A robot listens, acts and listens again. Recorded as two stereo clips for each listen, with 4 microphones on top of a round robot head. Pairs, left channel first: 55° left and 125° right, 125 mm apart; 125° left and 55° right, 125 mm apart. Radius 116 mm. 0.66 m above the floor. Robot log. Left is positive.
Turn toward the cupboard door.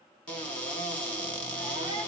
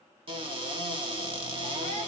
note: The cupboard door: 25° right.
cmd yaw -25
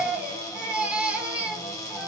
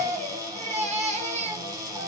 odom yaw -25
end: Found it: a cupboard door, straight ahead, 2 to 4 m away.